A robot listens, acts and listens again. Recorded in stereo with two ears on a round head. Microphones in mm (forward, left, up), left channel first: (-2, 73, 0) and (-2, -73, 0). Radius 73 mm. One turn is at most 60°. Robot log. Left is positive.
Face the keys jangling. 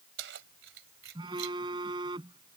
cmd yaw -60
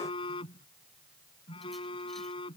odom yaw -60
note: Nothing new. It was at 30° right.
cmd yaw -30
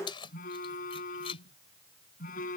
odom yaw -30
note: The keys jangling is now 35° left.
cmd yaw +35
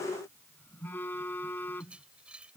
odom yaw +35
note: The keys jangling is now 10° right.
cmd yaw -10
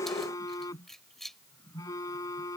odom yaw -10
end: Facing the keys jangling.